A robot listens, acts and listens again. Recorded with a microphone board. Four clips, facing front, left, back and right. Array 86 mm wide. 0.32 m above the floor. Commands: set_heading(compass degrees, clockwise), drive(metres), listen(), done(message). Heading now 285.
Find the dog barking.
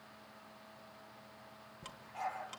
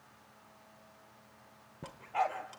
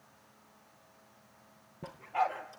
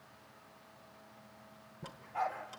set_heading(150)
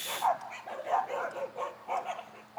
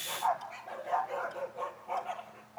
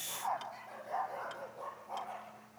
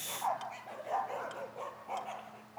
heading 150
done("Found it: a dog barking, straight ahead.")